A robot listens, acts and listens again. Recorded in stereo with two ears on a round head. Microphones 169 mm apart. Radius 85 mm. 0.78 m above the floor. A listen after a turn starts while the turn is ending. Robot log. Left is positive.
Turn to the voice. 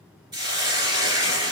cmd idle
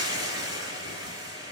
cmd idle
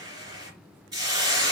end: I can't make out anyone speaking to turn to.